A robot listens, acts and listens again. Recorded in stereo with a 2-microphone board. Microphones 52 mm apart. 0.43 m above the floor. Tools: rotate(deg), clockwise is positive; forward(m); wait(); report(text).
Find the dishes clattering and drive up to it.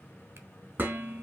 rotate(40)
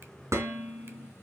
rotate(100)
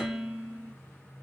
forward(1.0)
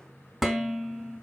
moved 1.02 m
forward(1.0)
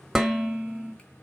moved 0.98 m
forward(1.0)
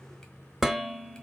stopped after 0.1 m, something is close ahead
report("I am next to the dishes clattering.")